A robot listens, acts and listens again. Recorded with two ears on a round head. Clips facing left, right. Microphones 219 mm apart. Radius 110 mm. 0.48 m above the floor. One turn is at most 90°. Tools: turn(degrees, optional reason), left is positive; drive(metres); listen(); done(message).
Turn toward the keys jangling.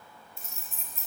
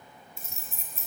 turn(degrees=-40, reason="The keys jangling: about 40° right or 140° right.")
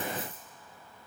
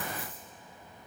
listen()
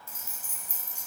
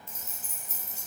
turn(degrees=15, reason="So it is at 15° left.")
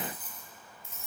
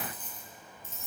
turn(degrees=10, reason="The keys jangling is now 10° left.")
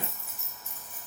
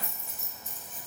turn(degrees=10, reason="The keys jangling is now 10° left.")
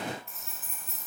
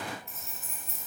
done("Facing the keys jangling.")